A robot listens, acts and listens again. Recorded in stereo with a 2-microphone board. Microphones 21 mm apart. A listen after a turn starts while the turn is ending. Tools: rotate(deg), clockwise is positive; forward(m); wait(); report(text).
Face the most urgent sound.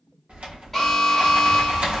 rotate(-30)
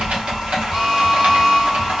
rotate(25)
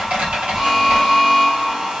report("Facing the alarm.")